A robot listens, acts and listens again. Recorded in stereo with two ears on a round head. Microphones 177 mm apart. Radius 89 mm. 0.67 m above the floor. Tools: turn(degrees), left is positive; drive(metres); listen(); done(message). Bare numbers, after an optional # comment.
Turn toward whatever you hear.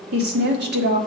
# The woman speaking: about 55° right or 125° right.
turn(-55)
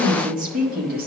# So it is at 50° right.
turn(-50)
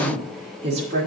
# The woman speaking is now 35° right.
turn(-35)
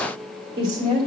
# The woman speaking is now 25° right.
turn(-25)
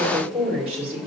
# The woman speaking is now 10° right.
turn(-10)
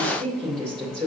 done("Found it: a woman speaking, straight ahead, 2 to 4 m away.")